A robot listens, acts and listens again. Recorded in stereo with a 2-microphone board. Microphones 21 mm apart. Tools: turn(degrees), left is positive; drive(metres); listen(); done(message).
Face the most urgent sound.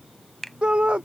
turn(degrees=-50)
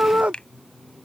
turn(degrees=-80)
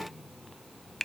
listen()
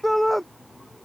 turn(degrees=10)
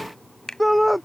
done("Found it: a shout, straight ahead.")